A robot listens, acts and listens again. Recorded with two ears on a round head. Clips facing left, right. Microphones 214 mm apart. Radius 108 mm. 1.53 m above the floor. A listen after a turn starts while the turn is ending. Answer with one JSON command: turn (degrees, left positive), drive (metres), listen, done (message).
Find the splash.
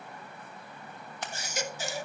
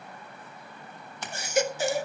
{"turn": -90}
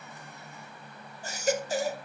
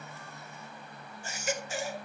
{"done": "I heard a splash from this way, but can't make it out now."}